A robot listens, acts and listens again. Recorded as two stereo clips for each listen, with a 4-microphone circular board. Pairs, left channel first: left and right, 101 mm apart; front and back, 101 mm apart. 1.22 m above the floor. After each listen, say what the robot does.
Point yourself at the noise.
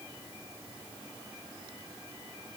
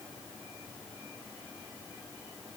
Keep listening.
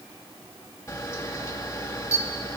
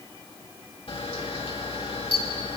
Turn 30° left.
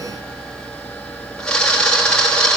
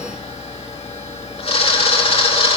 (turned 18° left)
Turn 10° left.
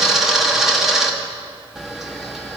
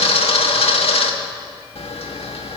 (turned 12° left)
Found it: a camera shutter, straight ahead, 2 to 4 m away.